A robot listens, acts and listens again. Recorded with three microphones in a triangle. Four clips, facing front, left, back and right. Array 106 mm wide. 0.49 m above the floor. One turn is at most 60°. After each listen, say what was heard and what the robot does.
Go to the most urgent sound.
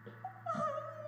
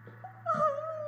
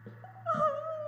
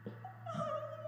The crying: 135° left. Turn 60° left.
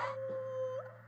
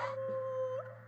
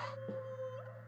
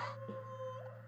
The crying is now 65° left. Turn 60° left.
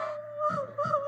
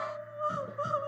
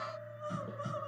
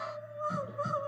The crying is now 15° left. Turn 15° left.
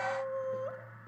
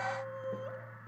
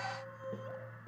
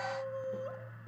Drive 1.0 m forward.
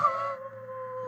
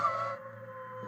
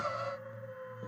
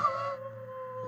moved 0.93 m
Drive 1.0 m forward.
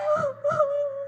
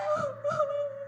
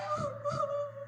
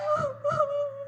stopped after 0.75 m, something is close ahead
Arrived at the crying, straight ahead.